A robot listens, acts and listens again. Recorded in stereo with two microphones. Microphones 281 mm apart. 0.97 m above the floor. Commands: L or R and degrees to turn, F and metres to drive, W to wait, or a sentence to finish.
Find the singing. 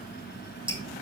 W
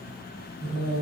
R65
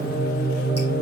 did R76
R30
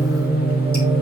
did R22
Found it: singing, straight ahead, over 4 m away.